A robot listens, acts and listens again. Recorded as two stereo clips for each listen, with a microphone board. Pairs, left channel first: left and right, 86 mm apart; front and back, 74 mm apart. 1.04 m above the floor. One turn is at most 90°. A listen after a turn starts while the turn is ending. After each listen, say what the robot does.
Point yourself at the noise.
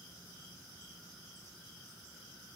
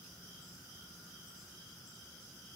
Keep listening.
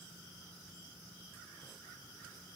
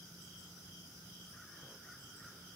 Keep listening.
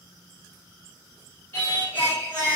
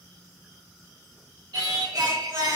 Turn 90° left.
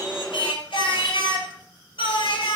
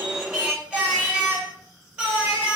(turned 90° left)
Turn 90° left.
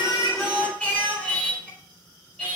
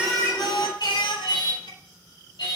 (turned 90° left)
Turn 15° left.
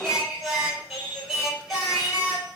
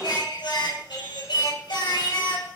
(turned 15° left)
Facing the singing, 2 to 4 m away.